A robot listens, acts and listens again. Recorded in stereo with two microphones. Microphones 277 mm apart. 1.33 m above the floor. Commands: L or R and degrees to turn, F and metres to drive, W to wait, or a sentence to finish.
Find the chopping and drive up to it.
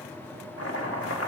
L60
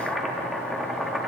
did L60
F1.0
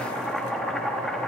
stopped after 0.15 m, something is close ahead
Blocked. The chopping is further on, straight ahead.